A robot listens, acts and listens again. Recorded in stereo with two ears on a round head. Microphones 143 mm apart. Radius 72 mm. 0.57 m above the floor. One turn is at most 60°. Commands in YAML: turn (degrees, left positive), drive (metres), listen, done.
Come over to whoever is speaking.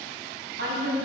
turn: -60
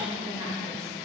turn: -20
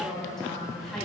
drive: 1.0
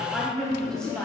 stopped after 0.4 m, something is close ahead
done: "Something is in my way. I am facing the woman speaking but have not reached it."